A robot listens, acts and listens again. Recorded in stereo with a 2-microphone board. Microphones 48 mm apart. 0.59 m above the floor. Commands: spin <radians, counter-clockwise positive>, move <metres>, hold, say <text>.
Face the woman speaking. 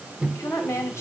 spin 1.22
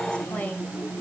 spin 0.52
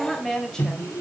spin 0.17
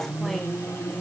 hold
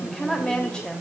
spin 0.35
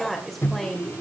say Found it: a woman speaking, straight ahead.